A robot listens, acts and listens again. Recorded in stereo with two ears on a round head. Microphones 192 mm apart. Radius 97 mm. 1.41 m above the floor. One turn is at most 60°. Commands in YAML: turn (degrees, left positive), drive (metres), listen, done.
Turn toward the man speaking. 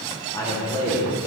turn: 30
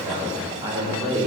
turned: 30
turn: -25
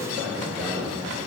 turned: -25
done: "Facing the man speaking."